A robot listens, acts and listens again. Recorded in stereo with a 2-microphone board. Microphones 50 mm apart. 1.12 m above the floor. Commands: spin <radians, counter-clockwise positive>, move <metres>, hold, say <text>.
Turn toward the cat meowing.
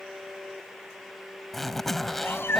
spin 0.87
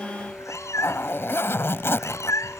spin 1.48
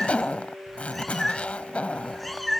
say Found it: a cat meowing, straight ahead.